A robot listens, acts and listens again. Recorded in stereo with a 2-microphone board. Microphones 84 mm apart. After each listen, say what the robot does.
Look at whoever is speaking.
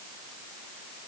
Keep listening.
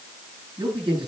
Turn 65° right.
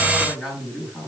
Found it: a man speaking, straight ahead.